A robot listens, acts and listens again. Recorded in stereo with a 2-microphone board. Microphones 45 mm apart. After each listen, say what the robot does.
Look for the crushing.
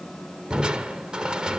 Turn 20° right.
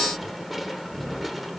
Found it: crushing, straight ahead.